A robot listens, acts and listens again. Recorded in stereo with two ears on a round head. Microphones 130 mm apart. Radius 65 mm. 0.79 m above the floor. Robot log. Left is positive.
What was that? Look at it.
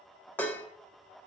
cmd yaw +30
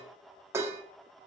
note: So it is at 20° right.
cmd yaw -20
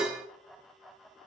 end: Found it: dishes clattering, straight ahead.